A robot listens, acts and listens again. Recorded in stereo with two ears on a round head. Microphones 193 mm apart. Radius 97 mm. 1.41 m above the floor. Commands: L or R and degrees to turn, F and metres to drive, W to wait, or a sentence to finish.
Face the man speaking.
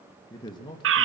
L20
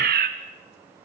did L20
W
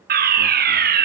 W
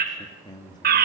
L20
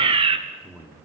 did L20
L30
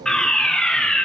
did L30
W
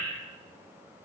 W
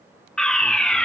I heard a man speaking, but can't make it out now. It was about 30° right or 150° left.